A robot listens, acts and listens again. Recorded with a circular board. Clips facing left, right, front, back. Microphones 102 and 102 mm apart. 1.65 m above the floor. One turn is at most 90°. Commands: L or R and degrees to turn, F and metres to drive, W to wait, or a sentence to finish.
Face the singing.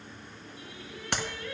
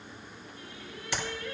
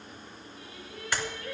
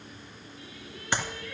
Found it: singing, straight ahead, over 4 m away.